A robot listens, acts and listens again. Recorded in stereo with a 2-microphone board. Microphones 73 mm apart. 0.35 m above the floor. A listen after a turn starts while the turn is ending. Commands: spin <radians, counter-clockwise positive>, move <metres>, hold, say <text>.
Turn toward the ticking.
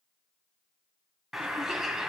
hold
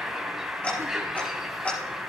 spin 0.35
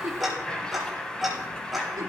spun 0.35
say Facing the ticking, over 4 m away.